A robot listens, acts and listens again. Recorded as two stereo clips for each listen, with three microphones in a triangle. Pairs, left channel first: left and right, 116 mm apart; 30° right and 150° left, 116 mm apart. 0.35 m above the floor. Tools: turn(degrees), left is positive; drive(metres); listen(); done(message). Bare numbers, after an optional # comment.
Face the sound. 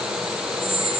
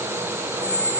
# The squeak: 155° left.
turn(155)
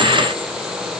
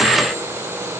listen()
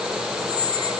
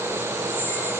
# The squeak is now 45° left.
turn(45)
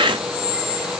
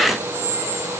done("Found it: a squeak, straight ahead, over 4 m away.")